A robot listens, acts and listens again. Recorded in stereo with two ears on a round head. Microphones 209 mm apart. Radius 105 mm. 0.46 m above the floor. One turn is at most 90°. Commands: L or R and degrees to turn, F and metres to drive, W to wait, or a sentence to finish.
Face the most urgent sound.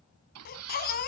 L45
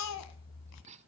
L90
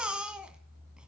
Found it: a baby crying, straight ahead, 1 to 2 m away.